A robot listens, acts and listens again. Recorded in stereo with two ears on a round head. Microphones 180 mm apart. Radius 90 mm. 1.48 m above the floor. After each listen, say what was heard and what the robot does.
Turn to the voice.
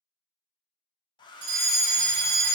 Keep listening.
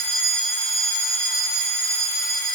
Keep listening.
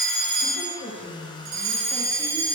The woman speaking: about 35° left or 145° left. Turn 35° left.
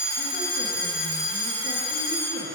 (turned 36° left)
Keep listening.
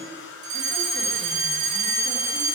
Keep listening.
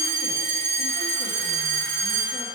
I heard a woman speaking, but can't make it out now. It was about straight ahead or 110° left.